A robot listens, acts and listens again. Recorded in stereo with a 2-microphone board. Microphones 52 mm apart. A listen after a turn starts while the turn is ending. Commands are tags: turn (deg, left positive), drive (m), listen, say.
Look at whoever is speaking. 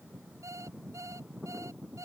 <listen/>
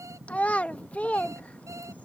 <turn deg="25"/>
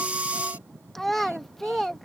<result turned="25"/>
<say>Facing the child speaking.</say>